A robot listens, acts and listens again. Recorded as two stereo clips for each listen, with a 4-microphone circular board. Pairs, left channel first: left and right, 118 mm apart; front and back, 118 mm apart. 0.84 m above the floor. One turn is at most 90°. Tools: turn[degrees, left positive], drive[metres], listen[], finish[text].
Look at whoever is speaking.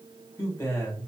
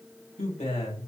Thought: The man speaking: 20° left.
Action: turn[20]
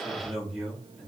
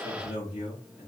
Action: finish[Facing the man speaking, 2 to 4 m away.]